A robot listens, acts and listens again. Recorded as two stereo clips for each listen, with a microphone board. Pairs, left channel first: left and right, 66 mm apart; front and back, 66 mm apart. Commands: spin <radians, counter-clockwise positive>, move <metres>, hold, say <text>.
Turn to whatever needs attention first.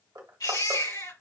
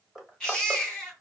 spin 1.48
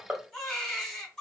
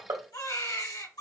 spin 0.17
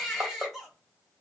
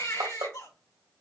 say Found it: a baby crying, straight ahead.